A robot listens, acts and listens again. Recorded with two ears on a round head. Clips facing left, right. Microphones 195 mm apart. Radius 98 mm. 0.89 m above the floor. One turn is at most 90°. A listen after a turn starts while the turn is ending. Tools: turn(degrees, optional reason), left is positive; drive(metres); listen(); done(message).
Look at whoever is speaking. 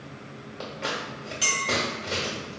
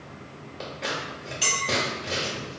listen()
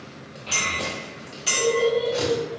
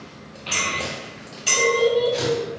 turn(degrees=-70, reason="The child speaking: about 70° right or 110° right.")
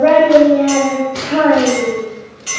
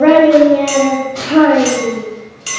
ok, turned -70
turn(degrees=-45, reason="So it is at 45° right.")
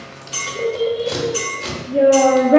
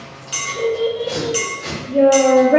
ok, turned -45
done("Facing the child speaking, under 1 m away.")